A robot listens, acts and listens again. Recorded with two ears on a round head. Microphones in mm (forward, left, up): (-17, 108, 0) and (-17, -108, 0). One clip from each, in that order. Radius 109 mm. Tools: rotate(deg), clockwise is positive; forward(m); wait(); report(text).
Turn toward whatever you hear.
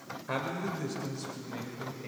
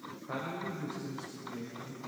rotate(-60)
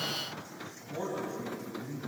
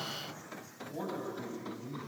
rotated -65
rotate(10)
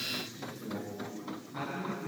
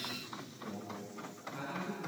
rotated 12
report("Found it: a man speaking, straight ahead, over 4 m away.")